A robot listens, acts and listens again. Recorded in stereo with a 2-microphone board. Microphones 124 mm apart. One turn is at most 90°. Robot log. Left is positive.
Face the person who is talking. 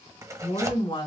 note: The woman speaking: about 35° left or 145° left.
cmd yaw +35
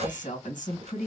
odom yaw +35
note: So it is at 105° left.
cmd yaw +90
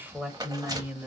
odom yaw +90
note: The woman speaking is now 15° right.
cmd yaw -15
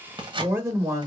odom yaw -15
note: The woman speaking is now 25° right.
cmd yaw -25
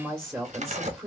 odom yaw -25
note: The woman speaking is now 10° right.
cmd yaw -10
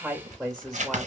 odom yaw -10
end: Found it: a woman speaking, straight ahead, 1 to 2 m away.